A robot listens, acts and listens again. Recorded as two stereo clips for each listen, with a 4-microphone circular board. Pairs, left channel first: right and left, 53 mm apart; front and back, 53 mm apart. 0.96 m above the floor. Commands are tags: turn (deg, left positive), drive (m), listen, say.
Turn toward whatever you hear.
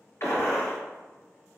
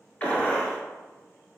<turn deg="-60"/>
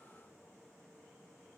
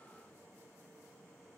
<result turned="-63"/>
<say>I heard a gunshot from this way, but can't make it out now.</say>